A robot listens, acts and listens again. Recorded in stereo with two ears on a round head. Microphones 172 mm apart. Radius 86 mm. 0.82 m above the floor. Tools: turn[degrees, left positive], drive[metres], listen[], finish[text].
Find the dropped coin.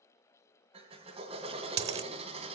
Thought: The dropped coin: about 35° right or 145° right.
Action: turn[-35]
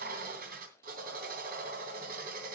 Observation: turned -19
Action: listen[]
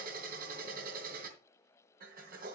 Action: finish[I heard a dropped coin, but can't make it out now. It was about 15° right or 130° right.]